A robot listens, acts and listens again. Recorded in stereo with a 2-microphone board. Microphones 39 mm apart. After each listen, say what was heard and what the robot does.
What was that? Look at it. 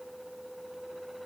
Keep listening.
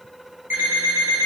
The alarm clock: about 65° right or 115° right. Turn 65° right.
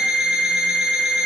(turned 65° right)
So it is at 25° right. Turn 25° right.
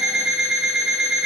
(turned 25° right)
The alarm clock is now 15° right. Turn 15° right.
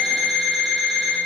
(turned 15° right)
Found it: an alarm clock, straight ahead.